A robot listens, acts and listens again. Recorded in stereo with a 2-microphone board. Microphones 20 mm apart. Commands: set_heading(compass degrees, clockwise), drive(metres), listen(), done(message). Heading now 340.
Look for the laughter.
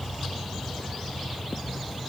listen()
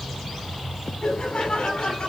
set_heading(280)
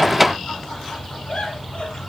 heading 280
set_heading(225)
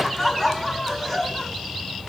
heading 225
done("Facing the laughter.")